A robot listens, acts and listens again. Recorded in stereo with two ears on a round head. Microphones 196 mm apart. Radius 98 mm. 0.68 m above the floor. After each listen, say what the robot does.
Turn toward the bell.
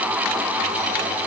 Keep listening.
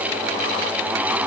Keep listening.
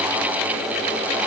I can't make out a bell to turn to.